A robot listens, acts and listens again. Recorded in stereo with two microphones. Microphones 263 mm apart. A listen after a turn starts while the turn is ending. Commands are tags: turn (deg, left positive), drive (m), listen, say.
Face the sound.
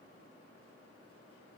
<listen/>
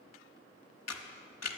<turn deg="75"/>
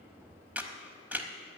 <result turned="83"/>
<say>Facing the camera shutter, 1 to 2 m away.</say>